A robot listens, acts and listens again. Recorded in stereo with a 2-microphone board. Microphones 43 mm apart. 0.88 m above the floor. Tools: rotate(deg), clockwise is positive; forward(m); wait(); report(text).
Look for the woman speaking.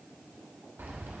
wait()
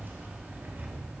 wait()
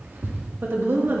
rotate(55)
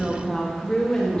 rotate(-20)
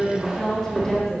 rotate(-20)
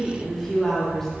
rotate(-10)
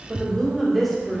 report("Facing the woman speaking.")